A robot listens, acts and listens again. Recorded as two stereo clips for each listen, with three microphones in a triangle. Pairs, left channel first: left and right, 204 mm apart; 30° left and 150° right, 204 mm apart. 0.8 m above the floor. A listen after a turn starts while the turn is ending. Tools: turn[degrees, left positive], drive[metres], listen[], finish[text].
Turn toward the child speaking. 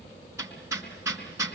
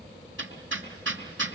Action: listen[]
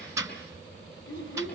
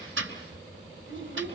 Thought: The child speaking: 75° left.
Action: turn[75]
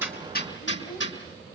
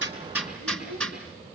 Action: listen[]
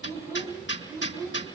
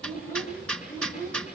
Thought: The child speaking is now 20° right.
Action: turn[-20]
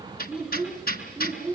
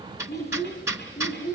Thought: The child speaking is now 10° right.
Action: turn[-10]
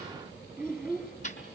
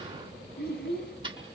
Action: finish[Found it: a child speaking, straight ahead.]